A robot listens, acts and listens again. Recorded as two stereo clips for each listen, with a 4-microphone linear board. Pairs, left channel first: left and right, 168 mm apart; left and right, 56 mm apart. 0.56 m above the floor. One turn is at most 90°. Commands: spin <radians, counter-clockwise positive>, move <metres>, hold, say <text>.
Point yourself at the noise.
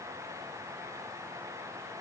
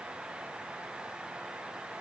hold
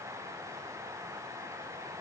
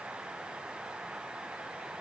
hold
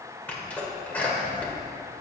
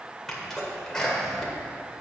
spin 0.52
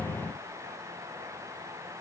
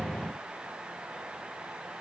hold
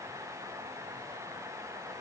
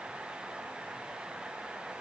say I heard a sneeze, but can't make it out now. It was about 20° right or 140° left.